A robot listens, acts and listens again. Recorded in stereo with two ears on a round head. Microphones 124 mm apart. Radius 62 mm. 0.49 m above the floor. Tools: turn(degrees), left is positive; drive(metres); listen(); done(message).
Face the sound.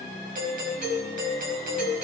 turn(degrees=-65)
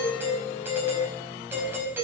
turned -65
turn(degrees=-15)
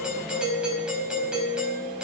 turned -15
done("Found it: a doorbell, straight ahead, over 4 m away.")